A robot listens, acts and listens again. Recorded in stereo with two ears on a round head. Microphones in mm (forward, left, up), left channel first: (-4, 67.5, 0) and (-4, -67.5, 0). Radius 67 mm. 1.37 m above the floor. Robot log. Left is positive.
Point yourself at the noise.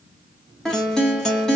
cmd yaw +30
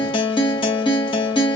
note: So it is at 145° left.
cmd yaw +145
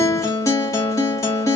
note: The guitar is now 20° left.
cmd yaw +20
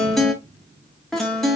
end: Found it: a guitar, straight ahead, 1 to 2 m away.